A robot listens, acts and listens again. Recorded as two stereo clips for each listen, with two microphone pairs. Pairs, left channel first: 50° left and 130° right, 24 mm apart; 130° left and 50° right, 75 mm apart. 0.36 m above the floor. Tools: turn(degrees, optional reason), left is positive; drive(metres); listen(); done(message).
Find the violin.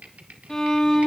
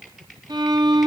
turn(degrees=-20, reason="The violin: 20° right.")
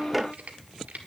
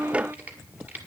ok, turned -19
done("Facing the violin.")